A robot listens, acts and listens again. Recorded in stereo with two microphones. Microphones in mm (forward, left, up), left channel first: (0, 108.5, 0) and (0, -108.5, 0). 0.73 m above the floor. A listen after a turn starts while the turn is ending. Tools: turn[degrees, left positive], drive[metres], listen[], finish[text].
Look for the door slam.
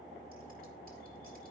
Action: listen[]
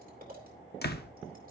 Thought: The door slam: about 50° left or 130° left.
Action: turn[50]
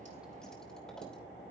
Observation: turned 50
Action: listen[]
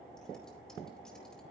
Action: finish[I heard a door slam, but can't make it out now. It was about straight ahead or 80° left.]